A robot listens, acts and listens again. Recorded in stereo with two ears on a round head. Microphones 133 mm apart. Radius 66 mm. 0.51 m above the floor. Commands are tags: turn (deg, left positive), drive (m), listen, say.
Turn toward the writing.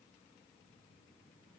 <listen/>
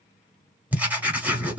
<turn deg="-30"/>
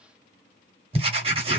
<turn deg="-135"/>
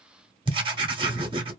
<turn deg="-40"/>
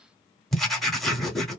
<say>Facing the writing.</say>